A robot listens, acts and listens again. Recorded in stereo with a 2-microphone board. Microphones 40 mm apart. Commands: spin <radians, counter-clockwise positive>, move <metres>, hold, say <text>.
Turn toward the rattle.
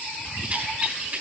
spin -0.70
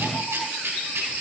spin -1.75
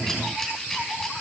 hold
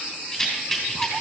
spin 0.26
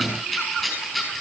say Facing the rattle, over 4 m away.